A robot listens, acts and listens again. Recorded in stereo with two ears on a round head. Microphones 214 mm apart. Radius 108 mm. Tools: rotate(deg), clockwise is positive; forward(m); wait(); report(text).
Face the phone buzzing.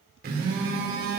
rotate(45)
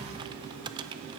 rotate(90)
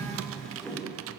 report("Facing the phone buzzing.")